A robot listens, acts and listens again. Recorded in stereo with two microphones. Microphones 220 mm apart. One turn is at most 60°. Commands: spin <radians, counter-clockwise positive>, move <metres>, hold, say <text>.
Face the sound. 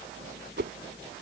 spin -0.96
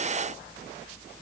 hold
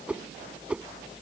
say Facing the whoosh.